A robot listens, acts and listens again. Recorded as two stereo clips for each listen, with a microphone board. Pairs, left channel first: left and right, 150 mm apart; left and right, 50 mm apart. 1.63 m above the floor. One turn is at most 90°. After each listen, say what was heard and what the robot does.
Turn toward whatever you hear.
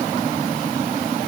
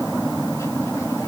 Keep listening.
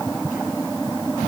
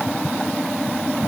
Keep listening.
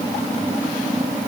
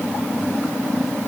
I can't make out anything.